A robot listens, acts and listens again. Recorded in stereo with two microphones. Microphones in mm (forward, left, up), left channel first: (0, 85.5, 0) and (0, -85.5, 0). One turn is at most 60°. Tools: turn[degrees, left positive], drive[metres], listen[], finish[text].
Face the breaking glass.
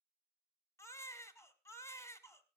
Action: listen[]
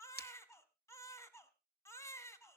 Thought: The breaking glass: about 65° left or 115° left.
Action: turn[60]
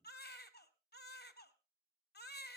Action: listen[]
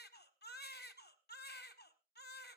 Action: finish[I heard breaking glass, but can't make it out now. It was about 5° left or 55° left.]